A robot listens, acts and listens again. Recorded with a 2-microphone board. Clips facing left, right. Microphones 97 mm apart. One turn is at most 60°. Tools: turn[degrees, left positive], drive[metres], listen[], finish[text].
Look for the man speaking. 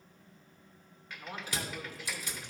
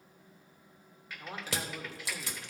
Thought: The man speaking: about 30° right or 150° right.
Action: turn[-30]
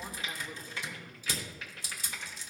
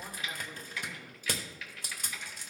Action: finish[Facing the man speaking.]